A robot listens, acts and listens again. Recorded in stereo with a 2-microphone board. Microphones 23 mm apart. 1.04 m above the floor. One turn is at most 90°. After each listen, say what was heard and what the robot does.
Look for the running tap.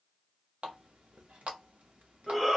The running tap: about 60° right or 120° right. Turn 60° right.
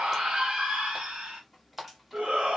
Facing the running tap.